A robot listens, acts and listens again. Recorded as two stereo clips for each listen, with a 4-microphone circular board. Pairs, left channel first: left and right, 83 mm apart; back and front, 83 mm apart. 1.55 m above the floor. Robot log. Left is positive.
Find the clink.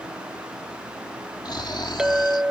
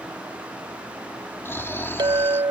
note: The clink: 10° right.
cmd yaw -10
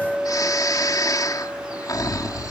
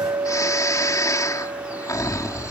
end: Facing the clink.